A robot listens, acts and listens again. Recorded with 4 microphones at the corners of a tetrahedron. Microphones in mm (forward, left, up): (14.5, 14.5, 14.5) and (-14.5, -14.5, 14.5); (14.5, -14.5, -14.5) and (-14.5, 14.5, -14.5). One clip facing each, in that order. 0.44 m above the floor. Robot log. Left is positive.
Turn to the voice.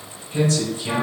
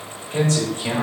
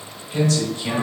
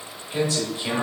note: The man speaking: 155° right.
cmd yaw -155
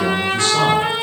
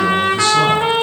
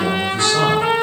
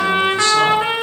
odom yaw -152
cmd idle
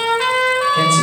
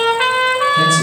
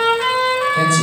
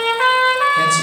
end: Facing the man speaking.